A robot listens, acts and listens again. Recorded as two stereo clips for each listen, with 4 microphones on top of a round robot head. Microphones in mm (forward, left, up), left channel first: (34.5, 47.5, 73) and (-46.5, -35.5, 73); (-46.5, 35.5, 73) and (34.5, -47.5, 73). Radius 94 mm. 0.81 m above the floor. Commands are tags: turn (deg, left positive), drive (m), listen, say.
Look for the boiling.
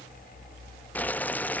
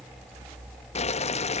<turn deg="120"/>
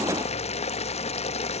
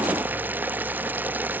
<turn deg="25"/>
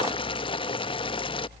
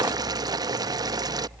<say>Found it: boiling, straight ahead.</say>